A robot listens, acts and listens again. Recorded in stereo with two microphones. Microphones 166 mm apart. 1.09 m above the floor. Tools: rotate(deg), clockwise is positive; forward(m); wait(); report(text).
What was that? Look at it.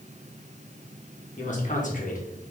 rotate(-50)
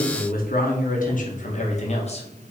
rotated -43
rotate(-40)
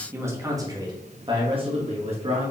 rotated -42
rotate(35)
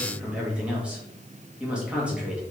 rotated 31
report("Facing the man speaking, 1 to 2 m away.")